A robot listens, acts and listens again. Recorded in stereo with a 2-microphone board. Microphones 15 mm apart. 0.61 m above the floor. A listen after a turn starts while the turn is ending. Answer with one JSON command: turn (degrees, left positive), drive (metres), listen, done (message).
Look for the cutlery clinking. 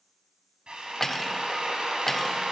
{"turn": 20}
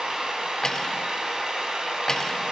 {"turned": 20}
{"turn": 140}
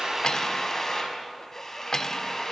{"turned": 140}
{"turn": 35}
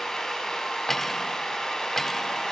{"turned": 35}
{"turn": 25}
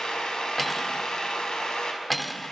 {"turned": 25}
{"done": "Found it: cutlery clinking, straight ahead."}